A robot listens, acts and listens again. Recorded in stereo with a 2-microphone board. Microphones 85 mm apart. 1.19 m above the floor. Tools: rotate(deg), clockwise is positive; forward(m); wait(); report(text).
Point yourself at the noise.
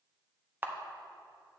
rotate(25)
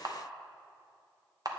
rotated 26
rotate(130)
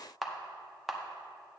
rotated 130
report("Found it: a camera shutter, straight ahead.")